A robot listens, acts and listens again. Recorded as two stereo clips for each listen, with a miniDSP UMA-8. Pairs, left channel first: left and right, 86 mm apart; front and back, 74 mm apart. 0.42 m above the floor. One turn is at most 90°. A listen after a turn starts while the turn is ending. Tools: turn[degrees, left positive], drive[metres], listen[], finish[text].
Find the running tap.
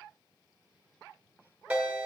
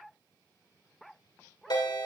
Action: listen[]
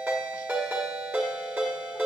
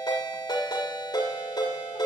Action: listen[]
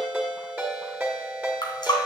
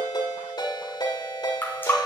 Thought: The running tap: 60° left.
Action: turn[60]
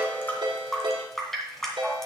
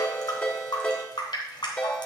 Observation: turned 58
Action: finish[Found it: a running tap, straight ahead.]